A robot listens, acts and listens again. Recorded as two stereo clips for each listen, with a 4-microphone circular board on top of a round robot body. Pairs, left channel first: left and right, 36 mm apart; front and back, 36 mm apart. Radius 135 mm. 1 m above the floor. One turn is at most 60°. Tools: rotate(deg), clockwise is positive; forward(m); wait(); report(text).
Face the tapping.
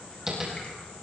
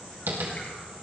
rotate(60)
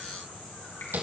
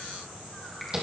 rotate(60)
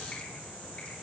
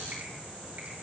rotate(50)
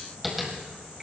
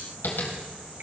report("Found it: tapping, straight ahead, 2 to 4 m away.")